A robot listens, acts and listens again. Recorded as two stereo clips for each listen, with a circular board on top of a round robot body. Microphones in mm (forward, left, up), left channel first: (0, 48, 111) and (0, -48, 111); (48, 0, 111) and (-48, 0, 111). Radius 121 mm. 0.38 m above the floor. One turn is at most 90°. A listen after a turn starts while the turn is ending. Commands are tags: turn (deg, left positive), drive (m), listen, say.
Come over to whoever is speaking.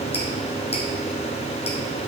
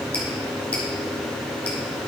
<listen/>
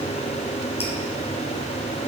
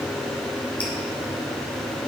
<listen/>
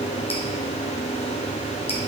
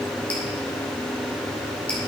<say>I can't make out anyone speaking.</say>